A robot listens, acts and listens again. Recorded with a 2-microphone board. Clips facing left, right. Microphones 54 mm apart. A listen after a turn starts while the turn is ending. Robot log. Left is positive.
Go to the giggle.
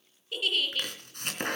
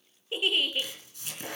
note: The giggle: about 20° right or 160° right.
cmd yaw -20
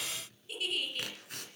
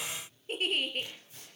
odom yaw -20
note: So it is at 140° right.
cmd yaw -140
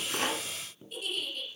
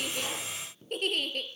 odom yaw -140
note: The giggle is now 55° right.
cmd yaw -55
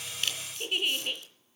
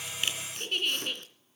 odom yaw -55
note: The giggle is now 10° left.
cmd yaw +10
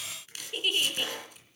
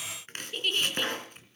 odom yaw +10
cmd fwd 1.0
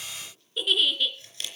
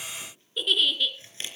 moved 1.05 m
cmd fwd 1.0
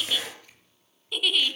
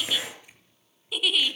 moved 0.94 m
cmd fwd 1.0
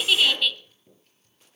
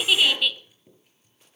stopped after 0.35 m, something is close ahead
note: The giggle is now 10° right.
cmd yaw -10
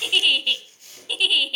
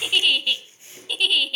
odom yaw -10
end: Arrived at the giggle, straight ahead.